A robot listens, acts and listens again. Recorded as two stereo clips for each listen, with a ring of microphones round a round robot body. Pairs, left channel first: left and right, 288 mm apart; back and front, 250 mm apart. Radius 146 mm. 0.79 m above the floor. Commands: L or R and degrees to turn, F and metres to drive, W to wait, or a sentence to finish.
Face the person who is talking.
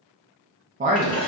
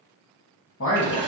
R150
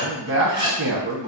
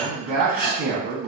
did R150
R45
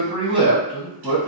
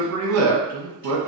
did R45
R20
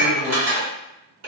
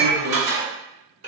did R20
W
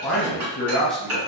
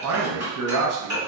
Facing the man speaking.